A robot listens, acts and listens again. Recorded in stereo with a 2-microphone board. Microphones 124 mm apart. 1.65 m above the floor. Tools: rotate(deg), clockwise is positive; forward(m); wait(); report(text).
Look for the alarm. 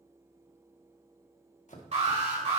rotate(60)
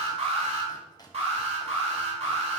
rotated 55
rotate(60)
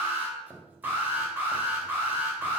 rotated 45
rotate(15)
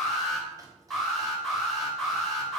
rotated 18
report("Facing the alarm, 2 to 4 m away.")